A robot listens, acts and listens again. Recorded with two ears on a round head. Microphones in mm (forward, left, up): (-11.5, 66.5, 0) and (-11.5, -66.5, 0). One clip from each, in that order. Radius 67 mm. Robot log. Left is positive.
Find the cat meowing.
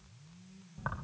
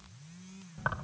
cmd idle
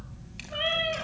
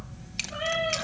note: The cat meowing: about 55° left or 125° left.
cmd yaw +55
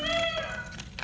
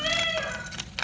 end: Found it: a cat meowing, straight ahead, over 4 m away.